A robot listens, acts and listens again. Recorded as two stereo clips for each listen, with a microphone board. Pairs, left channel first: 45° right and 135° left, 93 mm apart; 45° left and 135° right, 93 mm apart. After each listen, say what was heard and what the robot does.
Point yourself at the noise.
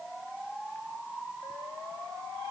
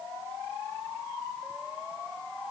Keep listening.
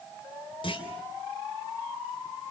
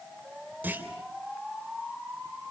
The clunk: 65° right. Turn 65° right.
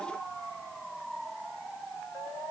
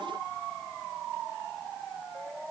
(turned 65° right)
I heard a clunk from this way, but can't make it out now.